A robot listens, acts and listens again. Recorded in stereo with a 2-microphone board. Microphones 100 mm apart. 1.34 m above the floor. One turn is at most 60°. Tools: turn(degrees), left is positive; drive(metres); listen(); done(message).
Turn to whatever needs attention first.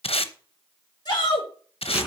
turn(degrees=45)
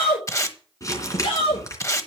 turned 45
turn(degrees=60)
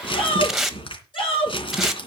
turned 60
turn(degrees=55)
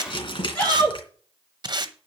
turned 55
turn(degrees=10)
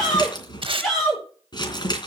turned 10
done("Found it: a shout, straight ahead.")